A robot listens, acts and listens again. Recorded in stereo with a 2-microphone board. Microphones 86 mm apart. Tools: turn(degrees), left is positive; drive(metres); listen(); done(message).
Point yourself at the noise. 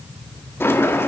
turn(degrees=25)
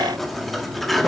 done("Found it: a sliding door, straight ahead.")